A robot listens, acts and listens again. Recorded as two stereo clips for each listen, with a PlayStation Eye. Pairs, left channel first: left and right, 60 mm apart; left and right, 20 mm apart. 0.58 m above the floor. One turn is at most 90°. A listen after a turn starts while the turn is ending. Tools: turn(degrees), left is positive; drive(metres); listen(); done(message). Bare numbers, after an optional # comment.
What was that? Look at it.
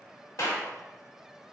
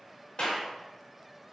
# The clap: about 55° left or 125° left.
turn(55)
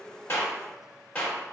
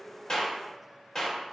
# So it is at 25° left.
turn(25)
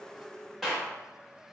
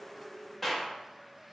done("Found it: a clap, straight ahead, 1 to 2 m away.")